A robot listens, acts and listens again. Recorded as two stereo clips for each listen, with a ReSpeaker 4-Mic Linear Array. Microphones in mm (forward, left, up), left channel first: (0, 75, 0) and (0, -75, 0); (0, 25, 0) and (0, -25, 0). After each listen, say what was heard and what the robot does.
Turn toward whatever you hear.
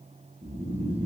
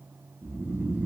The snoring: about 40° right or 140° right. Turn 40° right.
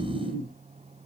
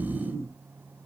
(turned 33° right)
So it is at 105° right. Turn 105° right.
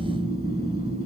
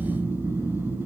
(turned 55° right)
The snoring is now 50° right. Turn 50° right.
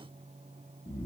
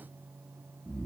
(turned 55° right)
The snoring is now 10° left. Turn 10° left.
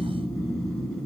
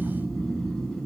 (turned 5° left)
Found it: snoring, straight ahead, 1 to 2 m away.